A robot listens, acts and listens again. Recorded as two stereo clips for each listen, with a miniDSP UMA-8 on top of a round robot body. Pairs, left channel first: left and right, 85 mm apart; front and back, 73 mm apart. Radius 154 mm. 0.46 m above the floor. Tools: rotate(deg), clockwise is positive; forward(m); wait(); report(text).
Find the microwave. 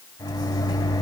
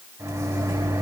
rotate(-135)
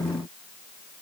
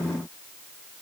wait()
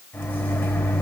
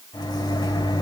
rotate(-25)
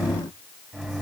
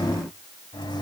report("Found it: a microwave, straight ahead.")